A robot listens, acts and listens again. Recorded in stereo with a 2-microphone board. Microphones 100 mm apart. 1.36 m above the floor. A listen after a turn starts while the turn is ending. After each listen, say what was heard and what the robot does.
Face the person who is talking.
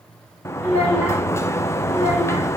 The child speaking: about 15° right or 165° right. Turn 15° right.
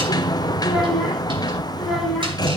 Found it: a child speaking, straight ahead, over 4 m away.